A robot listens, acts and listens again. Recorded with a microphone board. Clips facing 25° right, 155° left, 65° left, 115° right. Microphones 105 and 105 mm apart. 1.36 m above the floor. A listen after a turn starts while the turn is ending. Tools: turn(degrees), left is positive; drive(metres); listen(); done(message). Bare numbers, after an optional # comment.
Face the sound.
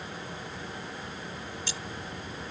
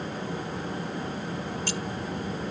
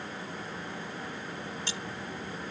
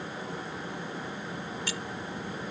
# The keys jangling: 130° left.
turn(130)
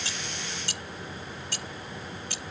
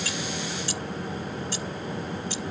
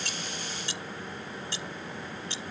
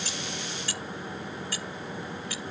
done("Found it: keys jangling, straight ahead.")